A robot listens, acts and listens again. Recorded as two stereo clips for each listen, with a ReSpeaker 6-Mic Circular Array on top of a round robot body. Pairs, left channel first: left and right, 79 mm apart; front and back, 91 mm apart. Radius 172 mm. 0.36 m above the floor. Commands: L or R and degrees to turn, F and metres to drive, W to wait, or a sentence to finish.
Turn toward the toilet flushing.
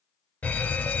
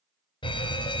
W
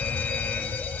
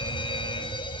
W
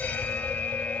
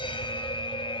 I can't make out a toilet flushing, only a fire alarm.